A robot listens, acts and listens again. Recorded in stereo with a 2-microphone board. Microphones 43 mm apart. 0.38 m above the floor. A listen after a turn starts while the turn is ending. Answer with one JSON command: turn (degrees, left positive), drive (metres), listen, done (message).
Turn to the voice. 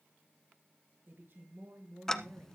{"turn": -65}
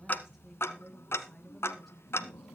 {"done": "Facing the woman speaking, over 4 m away."}